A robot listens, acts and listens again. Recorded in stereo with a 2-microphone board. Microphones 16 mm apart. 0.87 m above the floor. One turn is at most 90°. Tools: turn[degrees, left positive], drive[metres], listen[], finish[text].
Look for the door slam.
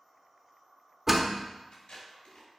Thought: The door slam: about 20° right or 160° right.
Action: turn[-20]
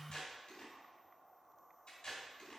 Action: listen[]
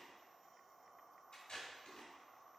Action: finish[I heard a door slam, but can't make it out now. It was about straight ahead or 140° right.]